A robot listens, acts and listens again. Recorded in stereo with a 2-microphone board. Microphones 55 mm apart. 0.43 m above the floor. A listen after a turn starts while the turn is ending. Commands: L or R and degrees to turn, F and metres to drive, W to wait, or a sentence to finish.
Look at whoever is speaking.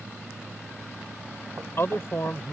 L55
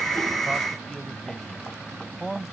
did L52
Found it: a man speaking, straight ahead.